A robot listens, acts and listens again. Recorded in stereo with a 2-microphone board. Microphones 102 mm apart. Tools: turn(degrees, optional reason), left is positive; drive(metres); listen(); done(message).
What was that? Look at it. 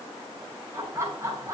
turn(degrees=-25, reason="The laughter: about 25° right or 155° right.")
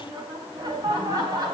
turn(degrees=-40, reason="The laughter: about 40° right or 140° right.")
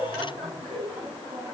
turn(degrees=-110, reason="So it is at 110° right.")
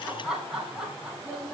done("Facing the laughter, over 4 m away.")